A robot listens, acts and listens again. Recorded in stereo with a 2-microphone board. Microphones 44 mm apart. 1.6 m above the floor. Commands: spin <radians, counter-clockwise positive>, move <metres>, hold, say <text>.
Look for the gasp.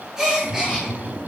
spin -0.52
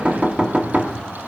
hold
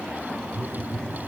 say I heard a gasp, but can't make it out now. It was about 15° left or 135° right.